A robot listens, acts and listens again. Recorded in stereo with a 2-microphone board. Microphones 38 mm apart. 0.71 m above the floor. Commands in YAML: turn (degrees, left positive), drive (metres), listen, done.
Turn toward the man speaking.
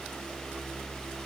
listen: true
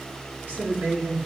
turn: -60
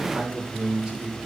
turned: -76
turn: -25
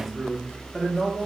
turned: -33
turn: 10
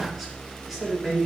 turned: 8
done: "Facing the man speaking, 1 to 2 m away."